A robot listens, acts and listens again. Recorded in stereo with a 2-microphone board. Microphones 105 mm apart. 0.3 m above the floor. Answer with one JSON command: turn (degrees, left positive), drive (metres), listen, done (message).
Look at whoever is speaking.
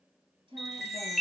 {"turn": -50}
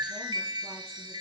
{"listen": true}
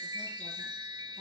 {"listen": true}
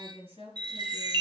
{"turn": -80}
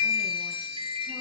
{"listen": true}
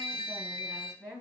{"turn": -15}
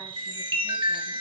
{"listen": true}
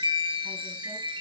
{"listen": true}
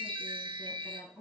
{"done": "Found it: a woman speaking, straight ahead, over 4 m away."}